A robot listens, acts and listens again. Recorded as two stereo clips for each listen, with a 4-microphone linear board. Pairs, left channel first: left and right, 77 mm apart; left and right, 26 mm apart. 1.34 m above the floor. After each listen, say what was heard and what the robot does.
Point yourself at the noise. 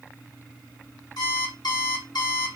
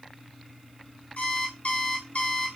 The alarm clock: about 65° left or 115° left. Turn 65° left.
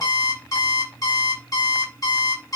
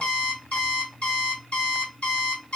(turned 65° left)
So it is at 45° left. Turn 45° left.
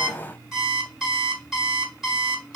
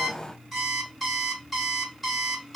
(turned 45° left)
Found it: an alarm clock, straight ahead, 2 to 4 m away.